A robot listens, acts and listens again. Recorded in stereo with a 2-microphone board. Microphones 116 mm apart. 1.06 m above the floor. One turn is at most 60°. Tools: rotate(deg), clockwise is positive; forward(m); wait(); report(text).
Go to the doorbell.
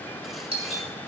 rotate(60)
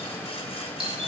rotate(55)
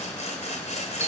wait()
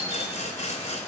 wait()
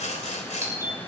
rotate(25)
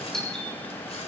forward(1.0)
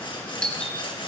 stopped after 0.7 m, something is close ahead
report("Blocked. The doorbell is further on, straight ahead.")